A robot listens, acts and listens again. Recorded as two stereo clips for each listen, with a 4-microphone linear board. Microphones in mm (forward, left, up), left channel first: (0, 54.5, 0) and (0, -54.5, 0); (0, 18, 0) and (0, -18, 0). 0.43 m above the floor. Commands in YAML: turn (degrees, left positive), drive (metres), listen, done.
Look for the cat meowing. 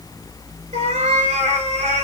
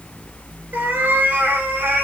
turn: -90
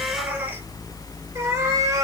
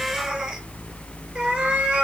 turn: -30
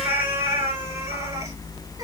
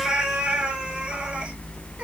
turn: -25
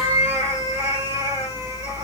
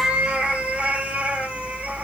turn: -25
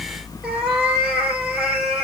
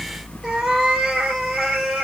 done: "Found it: a cat meowing, straight ahead."